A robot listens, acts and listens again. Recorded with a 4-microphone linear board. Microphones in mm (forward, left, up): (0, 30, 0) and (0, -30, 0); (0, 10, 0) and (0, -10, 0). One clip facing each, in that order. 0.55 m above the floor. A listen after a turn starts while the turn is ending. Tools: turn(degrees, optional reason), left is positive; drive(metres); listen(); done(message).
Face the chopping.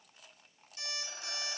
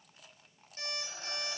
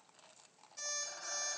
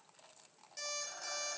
listen()
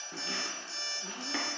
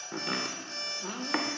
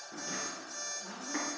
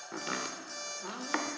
turn(degrees=-65, reason="The chopping: about 65° right or 115° right.")
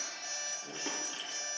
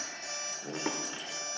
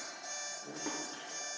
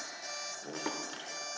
turn(degrees=-45, reason="So it is at 45° right.")
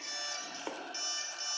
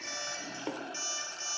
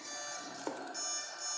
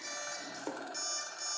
turn(degrees=10, reason="The chopping is now 10° left.")
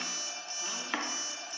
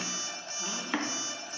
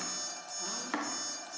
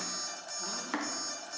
done("Found it: chopping, straight ahead, under 1 m away.")